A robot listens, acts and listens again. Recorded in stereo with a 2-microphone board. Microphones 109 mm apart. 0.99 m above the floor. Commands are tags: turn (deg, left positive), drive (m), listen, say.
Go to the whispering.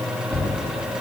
<listen/>
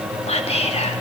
<turn deg="70"/>
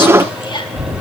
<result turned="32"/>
<turn deg="50"/>
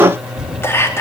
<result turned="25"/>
<turn deg="25"/>
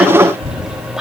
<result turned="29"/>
<drive m="1.0"/>
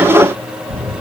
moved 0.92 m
<listen/>
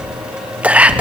<turn deg="-15"/>
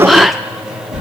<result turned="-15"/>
<drive m="1.0"/>
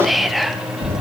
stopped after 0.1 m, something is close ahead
<say>Arrived at the whispering, straight ahead.</say>